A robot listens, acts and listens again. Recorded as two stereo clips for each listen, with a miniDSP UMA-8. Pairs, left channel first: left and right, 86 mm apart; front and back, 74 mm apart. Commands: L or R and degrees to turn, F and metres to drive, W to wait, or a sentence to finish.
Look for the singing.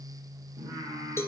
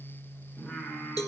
R65
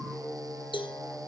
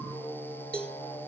R15
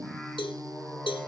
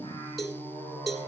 Found it: singing, straight ahead, over 4 m away.